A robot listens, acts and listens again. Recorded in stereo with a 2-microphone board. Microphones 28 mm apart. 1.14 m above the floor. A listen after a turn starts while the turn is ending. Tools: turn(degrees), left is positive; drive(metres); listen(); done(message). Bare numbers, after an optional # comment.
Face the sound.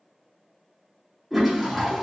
turn(-30)
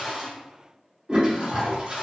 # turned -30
# So it is at 135° right.
turn(-135)
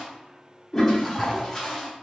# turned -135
# The toilet flushing is now 15° left.
turn(15)
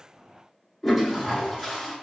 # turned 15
done("Facing the toilet flushing.")